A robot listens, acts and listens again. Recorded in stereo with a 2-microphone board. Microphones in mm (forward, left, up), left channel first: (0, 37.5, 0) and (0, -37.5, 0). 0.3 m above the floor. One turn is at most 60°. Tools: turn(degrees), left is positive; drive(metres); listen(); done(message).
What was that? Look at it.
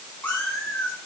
turn(degrees=20)
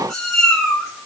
turn(degrees=30)
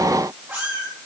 turn(degrees=-25)
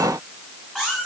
done("Found it: a cat meowing, straight ahead.")